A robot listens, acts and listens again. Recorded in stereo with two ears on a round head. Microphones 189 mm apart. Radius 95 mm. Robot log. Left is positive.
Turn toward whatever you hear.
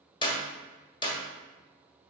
note: The clap: about 25° left or 155° left.
cmd yaw +25
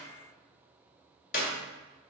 note: So it is at 130° left.
cmd yaw +130
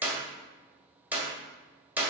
note: The clap is now 10° right.
cmd yaw -10
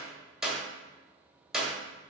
end: Facing the clap, 1 to 2 m away.